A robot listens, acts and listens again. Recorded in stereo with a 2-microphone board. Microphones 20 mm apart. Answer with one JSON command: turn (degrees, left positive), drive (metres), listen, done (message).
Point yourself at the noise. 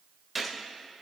{"turn": -30}
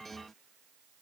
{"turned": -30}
{"listen": true}
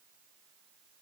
{"done": "I heard a gunshot, but can't make it out now. It was about 25° left or 145° right."}